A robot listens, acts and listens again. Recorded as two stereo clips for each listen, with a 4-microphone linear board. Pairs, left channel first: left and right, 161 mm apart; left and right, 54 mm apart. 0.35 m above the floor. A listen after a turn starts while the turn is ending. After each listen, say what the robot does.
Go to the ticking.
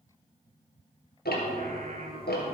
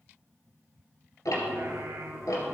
Turn 90° left.
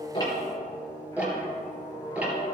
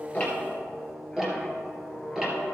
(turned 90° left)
Turn 10° right.
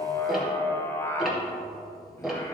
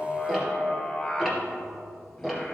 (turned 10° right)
Drive 1.0 m forward.
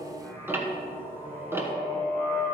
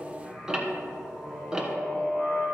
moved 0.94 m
Turn 15° right.
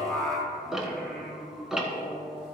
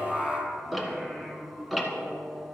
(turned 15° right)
Drive 1.0 m forward.
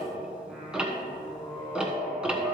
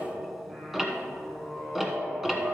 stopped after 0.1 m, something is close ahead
I am next to the ticking.